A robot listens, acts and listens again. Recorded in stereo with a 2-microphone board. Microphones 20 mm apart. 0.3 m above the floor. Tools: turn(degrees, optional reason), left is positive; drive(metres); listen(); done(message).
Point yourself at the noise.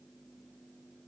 listen()
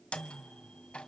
turn(degrees=60, reason="The microwave: about 60° left or 120° left.")
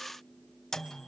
turn(degrees=20, reason="So it is at 20° left.")
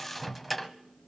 done("Facing the microwave, 1 to 2 m away.")